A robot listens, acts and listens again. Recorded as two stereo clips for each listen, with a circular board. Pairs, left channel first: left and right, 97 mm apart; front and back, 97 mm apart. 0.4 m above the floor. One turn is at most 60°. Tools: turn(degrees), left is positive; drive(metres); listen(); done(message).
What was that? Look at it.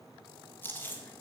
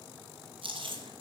turn(degrees=60)
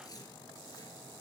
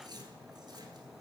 turn(degrees=60)
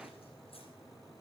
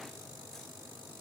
turn(degrees=60)
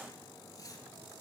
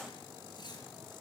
turn(degrees=40)
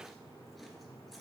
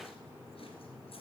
listen()
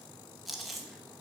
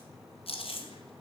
done("Facing the chewing.")